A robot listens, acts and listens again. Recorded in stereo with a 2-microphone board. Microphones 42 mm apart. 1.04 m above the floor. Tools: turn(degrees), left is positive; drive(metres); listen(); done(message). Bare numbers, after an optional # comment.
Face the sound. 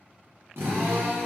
# The drill: about 75° right or 105° right.
turn(-75)
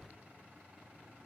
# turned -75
listen()
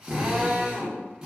# So it is at 20° right.
turn(-20)
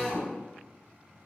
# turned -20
done("Facing the drill, under 1 m away.")